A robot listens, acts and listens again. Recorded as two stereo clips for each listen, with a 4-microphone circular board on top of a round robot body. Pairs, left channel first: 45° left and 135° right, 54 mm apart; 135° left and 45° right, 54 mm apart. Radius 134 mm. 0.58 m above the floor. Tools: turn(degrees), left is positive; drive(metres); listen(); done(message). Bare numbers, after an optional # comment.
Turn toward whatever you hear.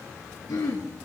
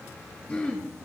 # The throat clearing: 65° left.
turn(65)
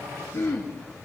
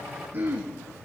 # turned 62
done("Found it: throat clearing, straight ahead.")